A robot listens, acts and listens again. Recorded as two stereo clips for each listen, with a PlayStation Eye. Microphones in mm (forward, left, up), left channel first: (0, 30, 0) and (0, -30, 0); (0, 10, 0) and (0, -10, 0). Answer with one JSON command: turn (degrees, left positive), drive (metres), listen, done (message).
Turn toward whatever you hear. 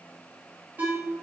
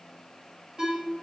{"turn": -30}
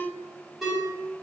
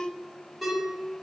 {"done": "Facing the ringtone, 1 to 2 m away."}